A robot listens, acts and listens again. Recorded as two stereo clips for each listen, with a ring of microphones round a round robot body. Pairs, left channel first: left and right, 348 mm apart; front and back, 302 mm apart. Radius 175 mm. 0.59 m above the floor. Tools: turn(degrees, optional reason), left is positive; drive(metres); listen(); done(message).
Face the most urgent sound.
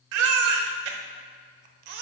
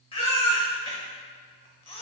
turn(degrees=-75, reason="The baby crying: 75° right.")
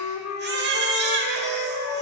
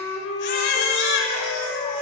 turn(degrees=-30, reason="The baby crying is now 30° right.")
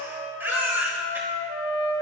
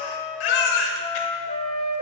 done("Facing the baby crying.")